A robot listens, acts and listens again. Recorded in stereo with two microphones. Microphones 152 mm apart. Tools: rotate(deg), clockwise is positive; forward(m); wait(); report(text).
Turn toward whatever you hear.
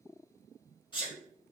rotate(-30)
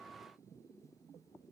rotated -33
wait()
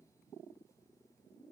report("I heard a sneeze, but can't make it out now. It was about 5° right or 115° left.")